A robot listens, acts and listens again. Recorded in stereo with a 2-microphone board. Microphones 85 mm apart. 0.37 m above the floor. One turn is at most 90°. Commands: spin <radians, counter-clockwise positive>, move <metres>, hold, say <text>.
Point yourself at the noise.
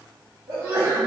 spin -0.70
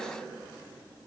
hold
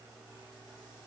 say I heard a sneeze, but can't make it out now. It was about straight ahead or 100° right.